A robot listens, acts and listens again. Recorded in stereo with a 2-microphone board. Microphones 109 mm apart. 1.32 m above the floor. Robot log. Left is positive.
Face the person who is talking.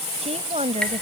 cmd yaw -90
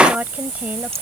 note: So it is at 15° right.
cmd yaw -15
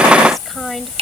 end: Facing the woman speaking.